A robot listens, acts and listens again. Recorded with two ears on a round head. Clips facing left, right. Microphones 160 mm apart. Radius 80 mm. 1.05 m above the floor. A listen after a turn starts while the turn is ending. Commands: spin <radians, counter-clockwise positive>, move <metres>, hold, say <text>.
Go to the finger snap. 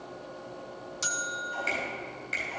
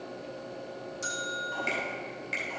spin -0.52
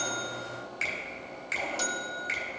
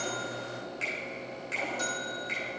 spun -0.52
spin 0.35
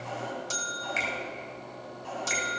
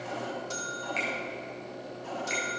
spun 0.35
spin 0.17
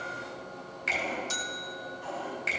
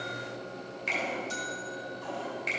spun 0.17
move 1.0
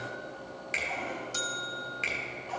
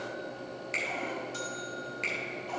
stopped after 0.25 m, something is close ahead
say Something is in my way. I am facing the finger snap but have not reached it.